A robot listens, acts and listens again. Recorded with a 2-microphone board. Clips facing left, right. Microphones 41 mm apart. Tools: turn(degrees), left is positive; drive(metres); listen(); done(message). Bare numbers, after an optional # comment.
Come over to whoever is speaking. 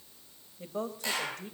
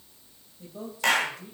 # The woman speaking: about 55° left or 125° left.
turn(55)
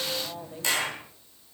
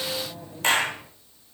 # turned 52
listen()
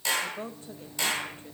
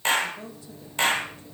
# So it is at 45° left.
turn(45)
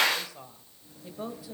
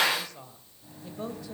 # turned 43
drive(1.0)
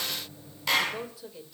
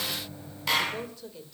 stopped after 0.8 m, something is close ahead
done("Arrived at the woman speaking, straight ahead.")